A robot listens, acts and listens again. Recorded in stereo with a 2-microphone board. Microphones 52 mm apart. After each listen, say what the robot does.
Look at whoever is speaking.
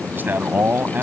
Turn 40° right.
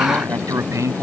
Turn 100° right.
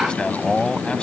Turn 20° left.
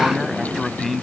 Facing the man speaking.